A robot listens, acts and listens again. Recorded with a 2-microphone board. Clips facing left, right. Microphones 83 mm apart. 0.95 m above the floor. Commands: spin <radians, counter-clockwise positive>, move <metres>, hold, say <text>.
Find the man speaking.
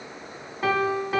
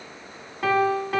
hold
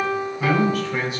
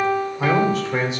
spin -0.44
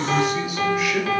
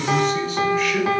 spin 0.17
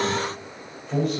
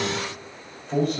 say Facing the man speaking, over 4 m away.